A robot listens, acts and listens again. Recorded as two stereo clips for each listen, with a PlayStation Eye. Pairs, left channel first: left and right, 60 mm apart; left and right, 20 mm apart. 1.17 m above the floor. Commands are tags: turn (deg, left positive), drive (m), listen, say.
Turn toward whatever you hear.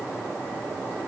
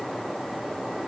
<listen/>
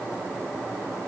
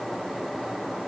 <listen/>
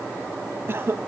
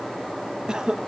<turn deg="-40"/>
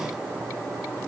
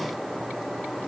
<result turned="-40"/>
<listen/>
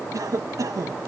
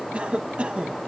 <turn deg="-95"/>
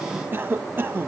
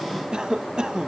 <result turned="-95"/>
<turn deg="-40"/>
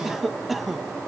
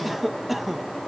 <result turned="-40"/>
<say>Found it: a cough, straight ahead.</say>